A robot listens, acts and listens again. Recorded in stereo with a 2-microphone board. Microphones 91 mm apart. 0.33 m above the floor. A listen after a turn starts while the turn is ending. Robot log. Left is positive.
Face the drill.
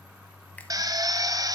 note: The drill: about 45° right or 135° right.
cmd yaw -45
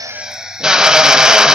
note: So it is at 10° right.
cmd yaw -10
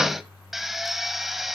end: Facing the drill, under 1 m away.